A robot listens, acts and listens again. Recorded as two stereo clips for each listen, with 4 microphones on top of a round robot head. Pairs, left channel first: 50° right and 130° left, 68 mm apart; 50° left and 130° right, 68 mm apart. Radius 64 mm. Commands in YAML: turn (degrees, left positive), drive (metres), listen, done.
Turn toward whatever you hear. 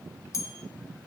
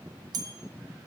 turn: -100
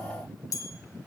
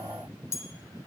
done: "Facing the bell, 1 to 2 m away."